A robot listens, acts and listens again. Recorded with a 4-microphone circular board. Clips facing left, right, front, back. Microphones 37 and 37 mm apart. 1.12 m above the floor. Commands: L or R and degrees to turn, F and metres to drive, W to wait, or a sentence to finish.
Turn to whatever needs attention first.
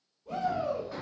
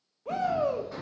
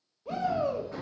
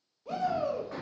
R85
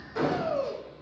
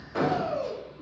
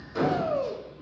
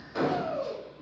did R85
Found it: a shout, straight ahead.